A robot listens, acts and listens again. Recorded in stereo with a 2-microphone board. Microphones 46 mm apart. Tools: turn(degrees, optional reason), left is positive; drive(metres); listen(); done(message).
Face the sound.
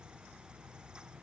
listen()
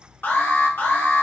turn(degrees=50, reason="The alarm: about 50° left or 130° left.")
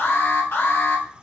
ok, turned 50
turn(degrees=70, reason="So it is at 70° left.")
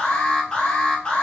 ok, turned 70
turn(degrees=25, reason="The alarm is now 25° left.")
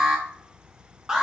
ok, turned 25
turn(degrees=-10, reason="The alarm is now 10° right.")
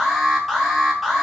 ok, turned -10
done("Found it: an alarm, straight ahead, 1 to 2 m away.")